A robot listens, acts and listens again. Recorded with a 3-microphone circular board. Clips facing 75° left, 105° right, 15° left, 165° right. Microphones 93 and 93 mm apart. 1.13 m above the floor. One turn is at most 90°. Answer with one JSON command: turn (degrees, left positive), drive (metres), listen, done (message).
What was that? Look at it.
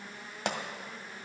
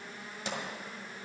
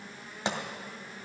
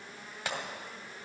{"turn": 80}
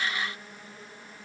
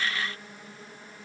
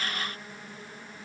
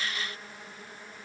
{"done": "Facing where the pop came from. I can't hear it now."}